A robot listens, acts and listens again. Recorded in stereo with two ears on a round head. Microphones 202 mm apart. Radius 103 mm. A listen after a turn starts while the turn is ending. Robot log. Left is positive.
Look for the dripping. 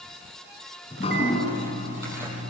note: The dripping: about 30° left or 150° left.
cmd yaw +30
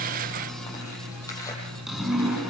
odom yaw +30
end: Facing the dripping, over 4 m away.